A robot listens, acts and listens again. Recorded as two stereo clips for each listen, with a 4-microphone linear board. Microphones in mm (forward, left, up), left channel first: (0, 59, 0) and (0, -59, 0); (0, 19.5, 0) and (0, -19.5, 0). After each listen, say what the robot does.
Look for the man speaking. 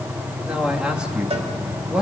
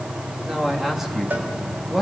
Turn 30° right.
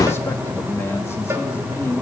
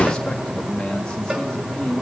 Turn 20° left.
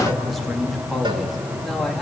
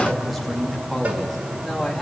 Found it: a man speaking, straight ahead, 2 to 4 m away.